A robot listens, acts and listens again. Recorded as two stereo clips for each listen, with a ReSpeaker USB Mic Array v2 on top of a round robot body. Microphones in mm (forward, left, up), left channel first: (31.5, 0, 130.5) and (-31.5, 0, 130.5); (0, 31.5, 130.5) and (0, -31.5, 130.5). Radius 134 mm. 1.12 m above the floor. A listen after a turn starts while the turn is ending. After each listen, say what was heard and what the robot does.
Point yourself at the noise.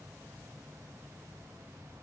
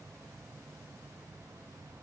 Keep listening.
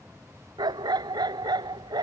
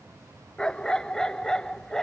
The dog barking: 170° left. Turn 170° left.
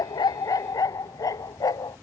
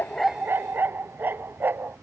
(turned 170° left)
The dog barking is now 30° right. Turn 30° right.
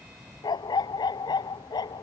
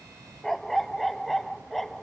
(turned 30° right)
Found it: a dog barking, straight ahead.